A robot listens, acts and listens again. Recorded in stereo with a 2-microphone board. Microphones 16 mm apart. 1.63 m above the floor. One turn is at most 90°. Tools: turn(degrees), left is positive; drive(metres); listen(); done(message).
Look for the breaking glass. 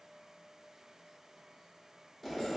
listen()
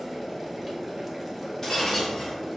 turn(degrees=30)
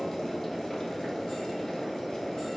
listen()
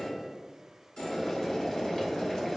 done("I heard breaking glass, but can't make it out now. It was about straight ahead or 120° left.")